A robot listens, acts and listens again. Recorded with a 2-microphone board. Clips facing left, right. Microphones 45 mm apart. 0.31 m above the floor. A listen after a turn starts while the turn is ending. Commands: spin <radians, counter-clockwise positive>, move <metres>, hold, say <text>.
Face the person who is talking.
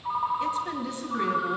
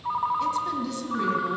spin 0.44
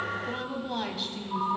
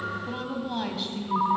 say Facing the woman speaking.